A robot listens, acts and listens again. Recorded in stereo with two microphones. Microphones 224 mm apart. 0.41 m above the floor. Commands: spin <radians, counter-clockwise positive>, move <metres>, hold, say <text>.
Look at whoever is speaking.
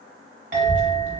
spin 0.87
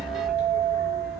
spin 1.40
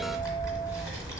spin 0.26
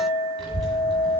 say Facing the child speaking, 1 to 2 m away.